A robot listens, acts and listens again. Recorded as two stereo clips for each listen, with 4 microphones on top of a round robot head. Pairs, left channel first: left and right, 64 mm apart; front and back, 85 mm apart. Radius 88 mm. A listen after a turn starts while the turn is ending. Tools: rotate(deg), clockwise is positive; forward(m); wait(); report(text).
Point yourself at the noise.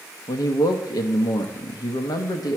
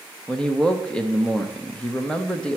rotate(-80)
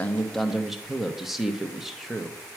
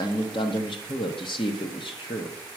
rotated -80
report("Facing the man speaking.")